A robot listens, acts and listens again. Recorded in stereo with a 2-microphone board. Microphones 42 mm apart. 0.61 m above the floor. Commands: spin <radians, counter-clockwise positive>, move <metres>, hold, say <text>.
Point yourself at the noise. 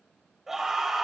spin -0.52
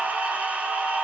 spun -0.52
spin -2.44
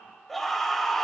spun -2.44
say Facing the scream.